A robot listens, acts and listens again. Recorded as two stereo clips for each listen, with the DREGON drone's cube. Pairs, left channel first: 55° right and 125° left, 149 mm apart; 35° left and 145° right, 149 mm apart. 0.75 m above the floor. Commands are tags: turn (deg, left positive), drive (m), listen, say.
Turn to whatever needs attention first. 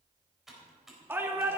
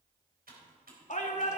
<turn deg="50"/>
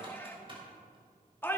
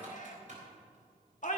<turn deg="20"/>
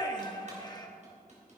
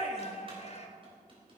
<say>Found it: a shout, straight ahead.</say>